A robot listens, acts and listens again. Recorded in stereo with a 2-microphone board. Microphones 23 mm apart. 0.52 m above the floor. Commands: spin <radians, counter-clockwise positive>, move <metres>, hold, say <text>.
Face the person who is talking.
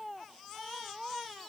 hold
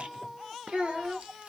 spin -0.96
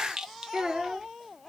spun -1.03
spin -0.70
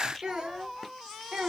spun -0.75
spin -0.87
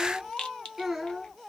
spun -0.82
spin -0.17
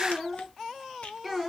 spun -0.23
say Facing the child speaking.